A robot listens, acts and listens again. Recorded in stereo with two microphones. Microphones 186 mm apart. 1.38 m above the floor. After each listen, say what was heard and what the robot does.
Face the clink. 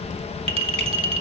The clink: about 30° right or 150° right. Turn 30° right.
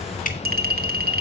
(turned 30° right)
So it is at 120° right. Turn 120° right.
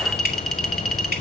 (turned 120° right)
Found it: a clink, straight ahead, 1 to 2 m away.